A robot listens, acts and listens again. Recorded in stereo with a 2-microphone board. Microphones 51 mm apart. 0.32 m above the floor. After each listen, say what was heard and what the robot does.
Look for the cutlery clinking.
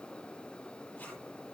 Keep listening.
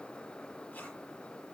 Keep listening.
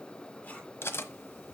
The cutlery clinking: about 55° left or 125° left. Turn 55° left.
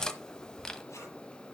So it is at 15° left. Turn 15° left.
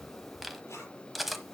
Facing the cutlery clinking.